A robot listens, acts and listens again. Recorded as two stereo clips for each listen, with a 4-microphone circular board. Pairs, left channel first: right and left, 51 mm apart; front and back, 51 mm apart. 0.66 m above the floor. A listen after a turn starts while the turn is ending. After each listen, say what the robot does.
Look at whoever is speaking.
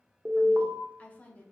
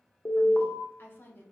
Turn 35° right.
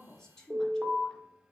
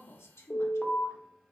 Turn 15° right.
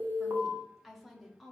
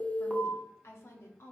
Facing the woman speaking, under 1 m away.